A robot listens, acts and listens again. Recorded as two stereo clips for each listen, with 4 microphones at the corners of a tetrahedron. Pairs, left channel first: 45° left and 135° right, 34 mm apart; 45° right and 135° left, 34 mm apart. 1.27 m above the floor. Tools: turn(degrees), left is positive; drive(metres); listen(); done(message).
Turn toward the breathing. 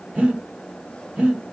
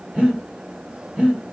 turn(degrees=-175)
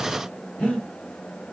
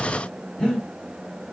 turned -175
turn(degrees=15)
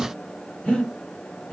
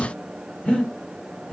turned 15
done("Found it: breathing, straight ahead.")